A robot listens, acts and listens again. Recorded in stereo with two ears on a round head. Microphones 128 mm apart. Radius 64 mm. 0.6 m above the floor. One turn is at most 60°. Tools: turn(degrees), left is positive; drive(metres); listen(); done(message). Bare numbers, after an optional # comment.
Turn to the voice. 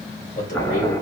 # The man speaking: about 60° left or 120° left.
turn(60)
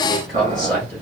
done("Facing the man speaking.")